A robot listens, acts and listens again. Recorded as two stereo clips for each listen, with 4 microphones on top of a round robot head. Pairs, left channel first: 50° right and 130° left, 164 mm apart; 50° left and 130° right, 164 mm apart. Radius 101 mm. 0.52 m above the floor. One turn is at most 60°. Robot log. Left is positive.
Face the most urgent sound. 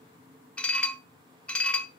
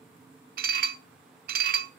cmd idle
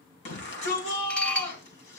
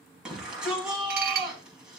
note: The shout: 45° right.
cmd yaw -45
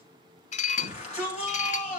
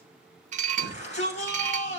end: Facing the shout, over 4 m away.